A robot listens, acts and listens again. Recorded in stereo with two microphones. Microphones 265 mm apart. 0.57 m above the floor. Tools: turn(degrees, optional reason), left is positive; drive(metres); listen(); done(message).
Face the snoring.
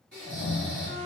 turn(degrees=-40, reason="The snoring: about 40° right or 140° right.")
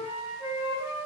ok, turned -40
listen()
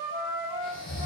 done("Facing the snoring, 1 to 2 m away.")